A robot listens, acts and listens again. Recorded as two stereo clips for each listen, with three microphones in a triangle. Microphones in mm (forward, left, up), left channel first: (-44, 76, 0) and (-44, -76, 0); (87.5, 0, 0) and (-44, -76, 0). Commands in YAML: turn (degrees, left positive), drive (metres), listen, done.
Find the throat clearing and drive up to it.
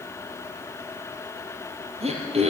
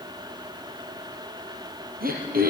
turn: -135
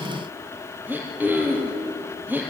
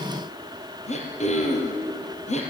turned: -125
turn: -10
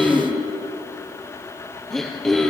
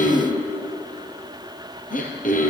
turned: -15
drive: 1.0
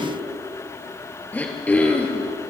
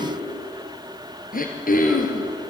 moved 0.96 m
turn: 10
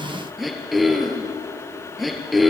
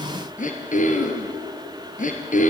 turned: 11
drive: 1.0
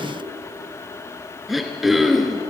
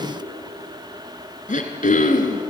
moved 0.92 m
drive: 1.0
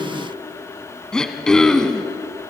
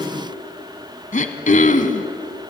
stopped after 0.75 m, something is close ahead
done: "I am next to the throat clearing."